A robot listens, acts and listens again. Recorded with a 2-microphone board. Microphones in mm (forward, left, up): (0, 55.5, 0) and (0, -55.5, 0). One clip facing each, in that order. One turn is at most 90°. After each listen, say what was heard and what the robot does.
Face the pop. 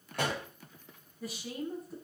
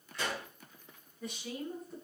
The pop: about 55° left or 125° left. Turn 55° left.
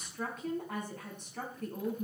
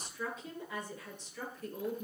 Keep listening.
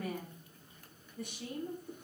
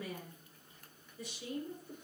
I heard a pop, but can't make it out now. It was about straight ahead or 70° left.